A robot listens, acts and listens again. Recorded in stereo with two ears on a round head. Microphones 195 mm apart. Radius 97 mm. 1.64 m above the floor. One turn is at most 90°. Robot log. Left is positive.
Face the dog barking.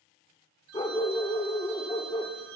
note: The dog barking: about 20° left or 160° left.
cmd yaw +20
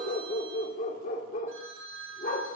note: So it is at 135° left.
cmd yaw +90
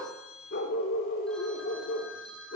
note: The dog barking is now 65° left.
cmd yaw +65
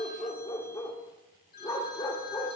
note: The dog barking is now 20° left.
cmd yaw +20
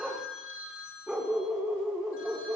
end: Found it: a dog barking, straight ahead, 2 to 4 m away.